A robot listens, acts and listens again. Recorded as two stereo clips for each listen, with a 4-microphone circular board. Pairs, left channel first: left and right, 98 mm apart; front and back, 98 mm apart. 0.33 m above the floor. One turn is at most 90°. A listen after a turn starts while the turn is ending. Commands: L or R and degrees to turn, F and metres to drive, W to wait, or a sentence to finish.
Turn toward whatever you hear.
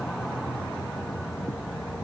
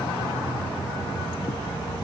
W
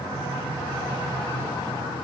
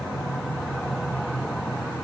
W
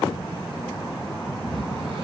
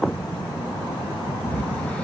R75
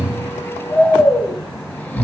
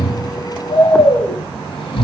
L20
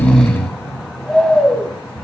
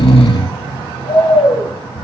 L10
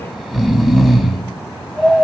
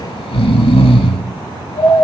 Found it: snoring, straight ahead.